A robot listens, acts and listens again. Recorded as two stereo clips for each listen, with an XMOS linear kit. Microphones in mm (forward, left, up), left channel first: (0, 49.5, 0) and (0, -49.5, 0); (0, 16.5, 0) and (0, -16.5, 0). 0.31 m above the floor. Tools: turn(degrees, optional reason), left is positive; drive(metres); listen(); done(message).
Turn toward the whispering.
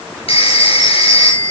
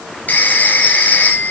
listen()
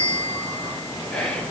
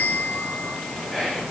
turn(degrees=30)
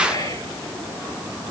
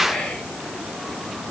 turn(degrees=140, reason="So it is at 140° left.")
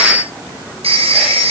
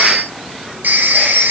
listen()
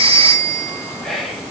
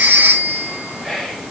done("Facing the whispering.")